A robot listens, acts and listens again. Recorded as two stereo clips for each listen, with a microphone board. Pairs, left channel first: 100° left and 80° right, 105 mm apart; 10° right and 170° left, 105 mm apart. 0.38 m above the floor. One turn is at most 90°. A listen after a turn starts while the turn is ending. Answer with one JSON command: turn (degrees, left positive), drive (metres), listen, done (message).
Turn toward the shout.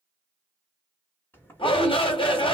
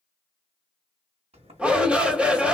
{"turn": 90}
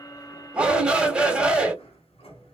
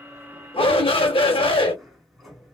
{"done": "Found it: a shout, straight ahead."}